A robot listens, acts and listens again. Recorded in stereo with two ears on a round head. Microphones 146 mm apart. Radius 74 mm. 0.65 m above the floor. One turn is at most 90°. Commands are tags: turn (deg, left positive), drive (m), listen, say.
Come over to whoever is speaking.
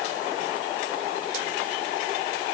<listen/>
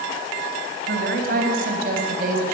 <turn deg="-55"/>
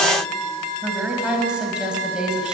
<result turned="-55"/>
<drive m="1.0"/>
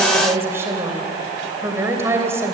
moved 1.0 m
<turn deg="-15"/>
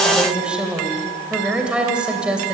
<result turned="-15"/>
<drive m="1.0"/>
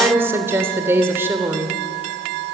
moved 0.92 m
<turn deg="-15"/>
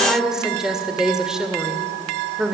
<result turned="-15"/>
<drive m="1.0"/>
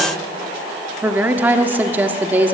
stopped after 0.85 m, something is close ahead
<turn deg="-15"/>
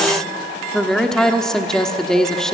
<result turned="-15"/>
<say>Arrived at the woman speaking, straight ahead.</say>